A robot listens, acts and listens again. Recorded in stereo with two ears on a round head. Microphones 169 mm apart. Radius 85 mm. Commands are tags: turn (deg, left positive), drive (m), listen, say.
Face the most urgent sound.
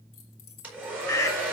<turn deg="15"/>
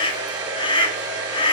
<turn deg="150"/>
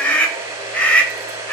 <turn deg="10"/>
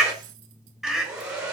<say>Facing the scream.</say>